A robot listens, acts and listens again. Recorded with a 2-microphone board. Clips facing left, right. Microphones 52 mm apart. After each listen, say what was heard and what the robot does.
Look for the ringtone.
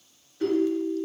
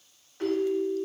The ringtone: about 65° right or 115° right. Turn 65° right.
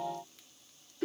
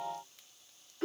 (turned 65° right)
So it is at 40° right. Turn 40° right.
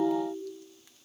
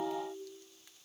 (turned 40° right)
Found it: a ringtone, straight ahead.